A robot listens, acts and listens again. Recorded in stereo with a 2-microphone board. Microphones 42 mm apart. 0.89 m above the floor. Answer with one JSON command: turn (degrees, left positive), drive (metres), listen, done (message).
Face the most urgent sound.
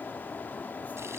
{"listen": true}
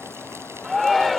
{"turn": 30}
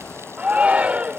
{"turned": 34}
{"turn": -30}
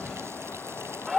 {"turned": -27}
{"done": "Facing the shout."}